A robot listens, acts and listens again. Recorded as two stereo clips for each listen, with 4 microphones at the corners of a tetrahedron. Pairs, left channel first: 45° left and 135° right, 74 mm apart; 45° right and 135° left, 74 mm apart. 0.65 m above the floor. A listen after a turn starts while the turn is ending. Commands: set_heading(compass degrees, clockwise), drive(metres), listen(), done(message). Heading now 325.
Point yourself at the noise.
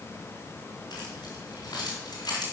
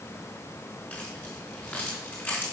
set_heading(305)
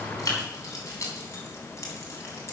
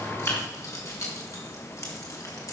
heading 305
done("Facing the keys jangling, 2 to 4 m away.")